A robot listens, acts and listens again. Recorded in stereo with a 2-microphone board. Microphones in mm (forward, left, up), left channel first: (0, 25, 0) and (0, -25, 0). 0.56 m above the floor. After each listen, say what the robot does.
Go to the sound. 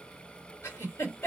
Turn 60° left.
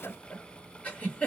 Turn 35° left.
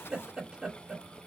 Turn 10° right.
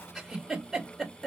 Drive 1.0 m forward.
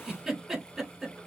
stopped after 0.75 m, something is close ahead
I am next to the giggle.